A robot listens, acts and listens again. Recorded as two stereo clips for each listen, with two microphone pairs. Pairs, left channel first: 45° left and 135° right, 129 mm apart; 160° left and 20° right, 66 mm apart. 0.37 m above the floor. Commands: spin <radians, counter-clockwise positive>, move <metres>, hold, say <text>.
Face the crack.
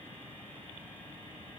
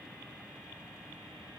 hold
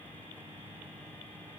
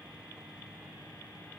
hold
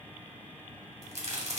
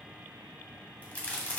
spin -2.36
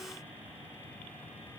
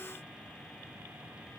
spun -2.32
say I heard a crack from this way, but can't make it out now.